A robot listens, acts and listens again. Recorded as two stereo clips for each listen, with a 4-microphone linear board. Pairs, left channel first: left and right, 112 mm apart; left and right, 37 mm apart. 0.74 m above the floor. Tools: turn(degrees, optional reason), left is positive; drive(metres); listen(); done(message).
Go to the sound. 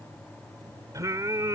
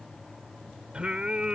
turn(degrees=-30, reason="The singing: about 30° right or 150° right.")
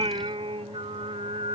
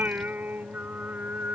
turn(degrees=-115, reason="So it is at 115° right.")
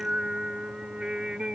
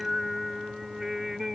turn(degrees=-10, reason="The singing is now 10° right.")
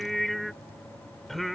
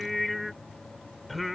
drive(metres=1.0)
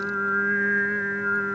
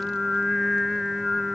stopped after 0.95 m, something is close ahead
done("Arrived at the singing, straight ahead.")